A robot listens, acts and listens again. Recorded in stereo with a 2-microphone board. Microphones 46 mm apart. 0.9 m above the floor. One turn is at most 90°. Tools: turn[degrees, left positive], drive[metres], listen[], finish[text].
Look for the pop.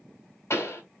Thought: The pop: about 70° left or 110° left.
Action: turn[70]
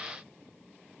Action: listen[]
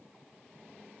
Action: finish[I heard a pop, but can't make it out now. It was about straight ahead or 40° left.]